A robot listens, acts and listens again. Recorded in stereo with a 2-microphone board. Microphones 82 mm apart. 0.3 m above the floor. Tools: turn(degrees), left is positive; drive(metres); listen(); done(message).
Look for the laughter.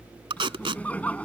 turn(degrees=15)
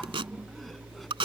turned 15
listen()
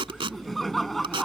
done("Facing the laughter.")